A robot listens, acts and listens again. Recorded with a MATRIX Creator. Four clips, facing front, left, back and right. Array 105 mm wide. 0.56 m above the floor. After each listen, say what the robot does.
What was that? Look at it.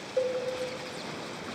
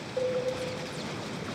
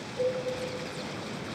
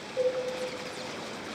Turn 10° left.
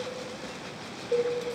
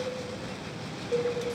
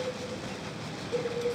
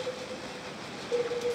Found it: a cowbell, straight ahead, 1 to 2 m away.